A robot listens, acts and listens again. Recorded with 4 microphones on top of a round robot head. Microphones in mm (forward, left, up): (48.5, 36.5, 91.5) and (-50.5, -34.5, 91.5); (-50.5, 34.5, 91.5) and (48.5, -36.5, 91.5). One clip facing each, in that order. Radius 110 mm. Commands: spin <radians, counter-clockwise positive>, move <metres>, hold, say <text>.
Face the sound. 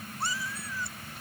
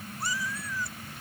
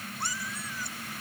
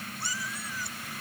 spin 1.75
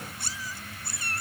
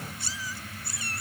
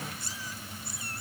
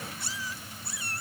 say Facing the cat meowing.